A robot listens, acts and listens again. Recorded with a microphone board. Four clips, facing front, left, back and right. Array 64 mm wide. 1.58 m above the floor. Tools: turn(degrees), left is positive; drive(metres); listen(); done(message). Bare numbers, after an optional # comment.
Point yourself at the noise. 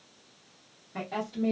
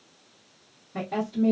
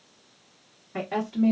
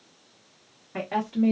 # The woman speaking: 115° right.
turn(-115)
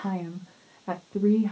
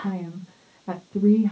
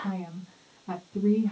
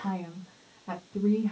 # The woman speaking is now 25° left.
turn(25)
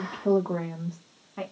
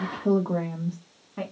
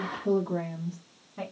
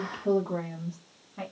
# The woman speaking is now 40° left.
turn(40)
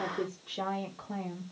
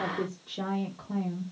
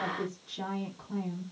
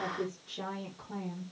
# The woman speaking is now 15° left.
turn(15)
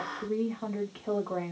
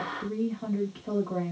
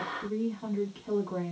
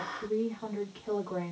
done("Facing the woman speaking, 1 to 2 m away.")